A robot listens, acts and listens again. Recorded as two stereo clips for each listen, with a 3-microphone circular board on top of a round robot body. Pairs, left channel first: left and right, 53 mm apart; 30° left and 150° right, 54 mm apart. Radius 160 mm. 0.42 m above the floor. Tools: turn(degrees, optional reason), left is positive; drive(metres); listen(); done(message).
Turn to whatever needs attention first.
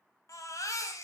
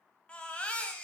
turn(degrees=100, reason="The baby crying: 100° left.")
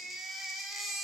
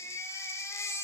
done("Found it: a baby crying, straight ahead.")